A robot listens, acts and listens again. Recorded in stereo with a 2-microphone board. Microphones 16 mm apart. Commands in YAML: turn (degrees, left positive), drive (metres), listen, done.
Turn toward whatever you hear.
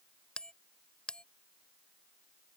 turn: 60
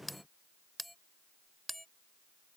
done: "Found it: a bell, straight ahead."